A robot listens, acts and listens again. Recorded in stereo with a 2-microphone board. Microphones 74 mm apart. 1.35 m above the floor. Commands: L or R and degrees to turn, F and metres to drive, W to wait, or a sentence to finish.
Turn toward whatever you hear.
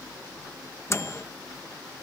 L35
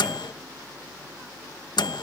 L105
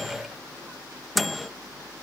Facing the microwave.